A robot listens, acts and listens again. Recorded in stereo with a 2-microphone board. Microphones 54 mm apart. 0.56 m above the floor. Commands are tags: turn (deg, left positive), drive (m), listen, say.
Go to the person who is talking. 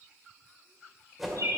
<listen/>
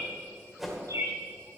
<listen/>
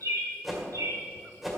<say>I can't make out anyone speaking to turn to.</say>